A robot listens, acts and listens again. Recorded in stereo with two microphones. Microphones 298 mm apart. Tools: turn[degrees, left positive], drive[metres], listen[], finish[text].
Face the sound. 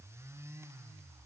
Action: listen[]
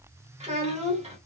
Thought: The child speaking: about 20° right or 160° right.
Action: turn[-20]
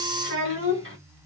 Thought: So it is at 135° right.
Action: turn[-135]
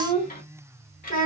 Thought: The child speaking is now 30° left.
Action: turn[30]
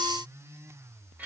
Action: listen[]
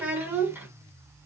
Action: finish[Facing the child speaking, 1 to 2 m away.]